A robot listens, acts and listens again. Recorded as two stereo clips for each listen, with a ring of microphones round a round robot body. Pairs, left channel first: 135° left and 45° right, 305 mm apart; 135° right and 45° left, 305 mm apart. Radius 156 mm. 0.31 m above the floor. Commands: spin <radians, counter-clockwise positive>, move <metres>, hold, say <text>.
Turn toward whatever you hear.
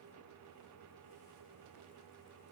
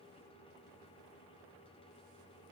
hold
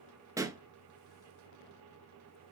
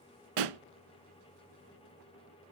spin 0.61
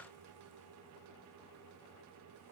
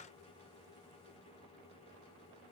say Facing where the pop came from. I can't hear it now.